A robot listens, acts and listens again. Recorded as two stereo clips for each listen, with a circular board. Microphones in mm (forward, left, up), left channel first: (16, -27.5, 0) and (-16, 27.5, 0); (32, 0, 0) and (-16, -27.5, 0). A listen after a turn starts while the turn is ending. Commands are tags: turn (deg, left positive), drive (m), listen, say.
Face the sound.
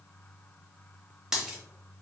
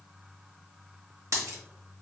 <turn deg="-160"/>
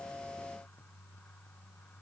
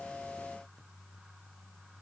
<say>Facing where the dropped coin came from. I can't hear it now.</say>